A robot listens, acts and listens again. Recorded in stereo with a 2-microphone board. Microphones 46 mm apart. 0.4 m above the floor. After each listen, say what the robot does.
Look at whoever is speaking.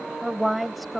Turn 30° left.
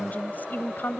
Turn 130° left.
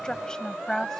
Turn 10° left.
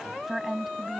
Turn 10° right.
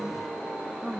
Turn 10° right.
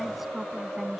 Keep listening.
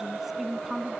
Found it: a woman speaking, straight ahead.